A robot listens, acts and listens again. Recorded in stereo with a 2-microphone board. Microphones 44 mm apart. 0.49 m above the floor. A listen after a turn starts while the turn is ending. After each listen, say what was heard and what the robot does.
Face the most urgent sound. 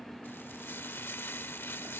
Keep listening.
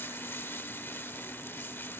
Keep listening.
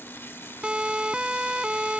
The siren: about 20° right or 160° right. Turn 20° right.
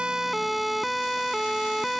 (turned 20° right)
Found it: a siren, straight ahead.